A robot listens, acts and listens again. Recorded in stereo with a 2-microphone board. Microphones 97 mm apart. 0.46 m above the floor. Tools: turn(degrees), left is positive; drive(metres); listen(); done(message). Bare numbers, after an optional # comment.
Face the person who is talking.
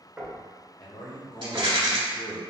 # The man speaking: about 60° left or 120° left.
turn(60)
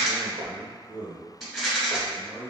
done("Facing the man speaking, 1 to 2 m away.")